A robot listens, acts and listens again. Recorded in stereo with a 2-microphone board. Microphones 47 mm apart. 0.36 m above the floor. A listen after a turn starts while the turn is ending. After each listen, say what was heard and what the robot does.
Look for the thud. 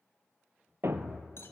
The thud: about 60° right or 120° right. Turn 60° right.
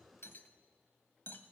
Keep listening.
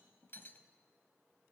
I heard a thud, but can't make it out now. It was about straight ahead or 60° right.